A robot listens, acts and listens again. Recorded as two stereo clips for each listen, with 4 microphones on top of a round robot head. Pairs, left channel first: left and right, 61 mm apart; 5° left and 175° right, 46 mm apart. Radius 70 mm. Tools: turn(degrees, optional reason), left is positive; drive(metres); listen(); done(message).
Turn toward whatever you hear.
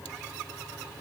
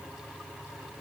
listen()
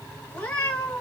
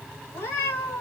turn(degrees=20, reason="The cat meowing: 20° left.")
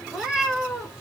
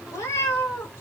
turn(degrees=-10, reason="The cat meowing is now 10° right.")
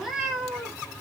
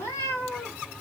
turn(degrees=-15, reason="The cat meowing is now 15° right.")
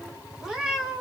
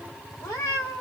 turn(degrees=-20, reason="The cat meowing is now 20° right.")
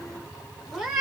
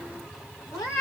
turn(degrees=-10, reason="The cat meowing is now 10° right.")
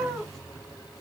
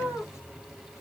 done("Facing the cat meowing.")